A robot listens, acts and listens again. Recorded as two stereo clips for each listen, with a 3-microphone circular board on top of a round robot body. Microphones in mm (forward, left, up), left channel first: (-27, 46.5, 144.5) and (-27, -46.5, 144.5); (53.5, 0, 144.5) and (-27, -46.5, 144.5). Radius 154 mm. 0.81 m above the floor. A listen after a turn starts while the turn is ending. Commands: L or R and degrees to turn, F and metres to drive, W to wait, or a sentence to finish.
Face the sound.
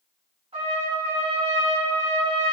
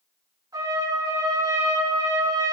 R100
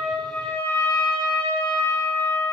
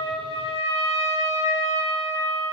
L25
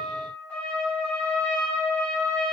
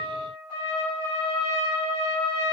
L15
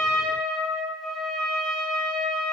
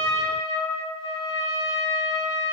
Facing the trumpet, over 4 m away.